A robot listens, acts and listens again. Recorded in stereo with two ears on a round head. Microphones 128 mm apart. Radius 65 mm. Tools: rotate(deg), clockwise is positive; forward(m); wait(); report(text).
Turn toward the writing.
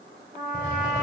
rotate(-15)
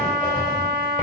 rotate(-155)
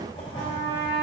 rotate(-35)
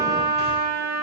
wait()
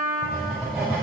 report("Found it: writing, straight ahead.")